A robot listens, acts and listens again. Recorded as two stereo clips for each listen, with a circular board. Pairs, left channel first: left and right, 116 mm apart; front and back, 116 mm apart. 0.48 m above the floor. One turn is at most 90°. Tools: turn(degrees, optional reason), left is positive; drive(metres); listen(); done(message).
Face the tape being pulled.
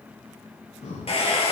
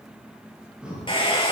listen()
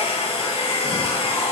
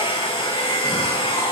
listen()
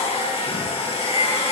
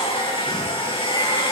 done("I can't make out tape being pulled, only a hair dryer and breathing.")